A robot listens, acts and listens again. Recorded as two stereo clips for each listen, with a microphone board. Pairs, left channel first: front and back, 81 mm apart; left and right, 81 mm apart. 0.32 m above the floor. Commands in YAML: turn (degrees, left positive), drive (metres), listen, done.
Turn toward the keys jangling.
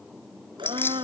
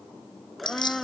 turn: 60
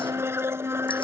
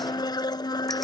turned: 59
listen: true
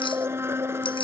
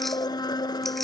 listen: true
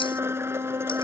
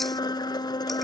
done: "I heard keys jangling from this way, but can't make it out now."